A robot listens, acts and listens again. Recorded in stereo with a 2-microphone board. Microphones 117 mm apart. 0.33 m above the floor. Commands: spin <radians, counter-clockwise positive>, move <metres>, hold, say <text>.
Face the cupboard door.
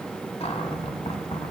spin 1.05
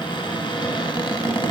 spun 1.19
spin 0.79
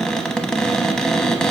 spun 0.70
say Found it: a cupboard door, straight ahead.